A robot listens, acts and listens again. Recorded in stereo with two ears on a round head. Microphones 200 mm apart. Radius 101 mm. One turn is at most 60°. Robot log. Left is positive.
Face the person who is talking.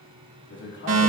note: The man speaking: about 55° left or 125° left.
cmd yaw +55
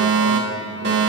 cmd idle
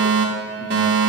cmd idle
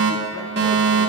end: I heard a man speaking, but can't make it out now. It was about straight ahead or 70° left.